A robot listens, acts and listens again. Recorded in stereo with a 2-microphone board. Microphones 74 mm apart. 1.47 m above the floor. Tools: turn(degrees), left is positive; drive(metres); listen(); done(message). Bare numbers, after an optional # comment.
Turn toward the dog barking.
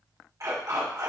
# The dog barking: about 55° right or 125° right.
turn(-55)
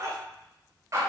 # So it is at 45° right.
turn(-45)
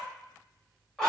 done("Found it: a dog barking, straight ahead.")